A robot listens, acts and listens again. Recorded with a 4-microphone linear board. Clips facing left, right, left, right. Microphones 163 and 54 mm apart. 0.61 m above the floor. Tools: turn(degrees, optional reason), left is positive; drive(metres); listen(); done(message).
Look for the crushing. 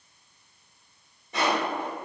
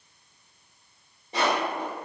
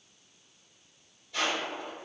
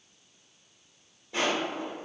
turn(degrees=-25, reason="The crushing: about 25° right or 155° right.")
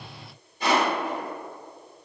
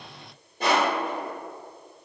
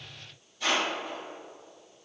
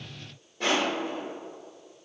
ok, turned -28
turn(degrees=-120, reason="So it is at 120° right.")
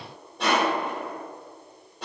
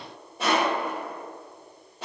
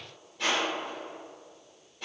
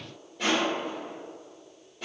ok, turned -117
done("Found it: crushing, straight ahead, 2 to 4 m away.")